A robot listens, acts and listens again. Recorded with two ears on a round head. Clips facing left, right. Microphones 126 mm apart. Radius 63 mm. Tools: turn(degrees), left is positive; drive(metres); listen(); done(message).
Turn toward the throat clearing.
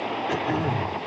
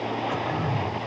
turn(degrees=40)
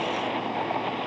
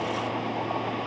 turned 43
listen()
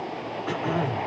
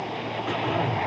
done("Found it: throat clearing, straight ahead.")